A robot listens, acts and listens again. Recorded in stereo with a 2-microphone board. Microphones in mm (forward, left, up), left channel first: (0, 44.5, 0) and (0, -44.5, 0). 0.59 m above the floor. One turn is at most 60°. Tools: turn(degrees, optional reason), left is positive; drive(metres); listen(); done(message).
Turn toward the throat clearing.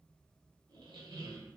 listen()
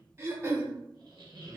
turn(degrees=-30, reason="The throat clearing: about 30° right or 150° right.")
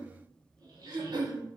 turn(degrees=-60, reason="So it is at 115° right.")
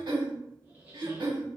turn(degrees=-60, reason="The throat clearing is now 65° right.")
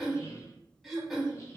done("Found it: throat clearing, straight ahead.")